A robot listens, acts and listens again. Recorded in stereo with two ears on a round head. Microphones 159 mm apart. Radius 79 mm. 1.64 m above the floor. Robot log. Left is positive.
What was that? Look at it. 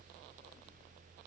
cmd idle
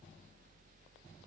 cmd idle
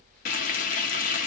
note: The frying: about 50° left or 130° left.
cmd yaw +50
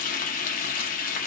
note: So it is at 65° left.
cmd yaw +65
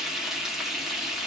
end: Facing the frying.